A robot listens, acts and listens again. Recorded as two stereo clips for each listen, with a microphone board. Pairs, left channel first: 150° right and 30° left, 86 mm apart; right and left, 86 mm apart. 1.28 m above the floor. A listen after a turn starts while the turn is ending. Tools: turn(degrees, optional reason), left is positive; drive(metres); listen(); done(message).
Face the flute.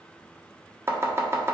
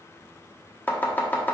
listen()
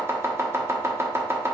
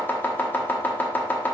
listen()
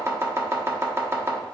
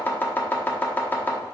done("I can't make out a flute to turn to.")